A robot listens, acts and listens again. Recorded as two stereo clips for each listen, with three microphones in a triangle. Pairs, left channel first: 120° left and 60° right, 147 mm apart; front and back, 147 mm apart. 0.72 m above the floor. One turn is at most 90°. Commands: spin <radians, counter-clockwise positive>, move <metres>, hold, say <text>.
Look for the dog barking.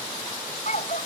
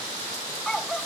spin 1.48
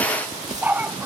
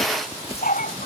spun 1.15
spin 0.35
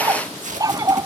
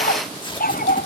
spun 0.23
say Facing the dog barking.